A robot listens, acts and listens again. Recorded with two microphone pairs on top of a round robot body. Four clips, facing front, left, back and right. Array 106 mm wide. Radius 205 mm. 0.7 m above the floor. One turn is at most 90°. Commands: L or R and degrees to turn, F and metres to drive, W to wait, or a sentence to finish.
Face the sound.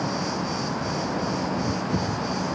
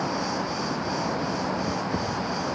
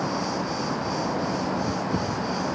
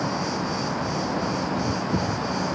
W
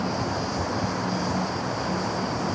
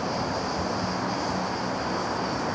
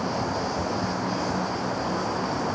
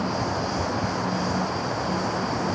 W
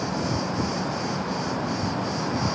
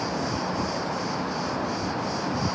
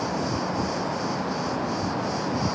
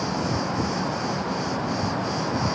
I can't make out anything to turn to.